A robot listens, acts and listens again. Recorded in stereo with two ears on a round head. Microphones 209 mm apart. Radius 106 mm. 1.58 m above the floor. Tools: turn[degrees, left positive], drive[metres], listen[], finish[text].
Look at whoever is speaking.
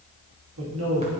Thought: The man speaking: about 65° right or 115° right.
Action: turn[-65]
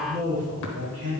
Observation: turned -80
Thought: So it is at 50° right.
Action: turn[-50]
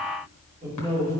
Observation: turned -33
Thought: The man speaking is now 25° right.
Action: turn[-25]
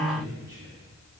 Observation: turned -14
Thought: The man speaking is now 15° right.
Action: turn[-15]
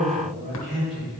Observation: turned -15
Action: finish[Found it: a man speaking, straight ahead.]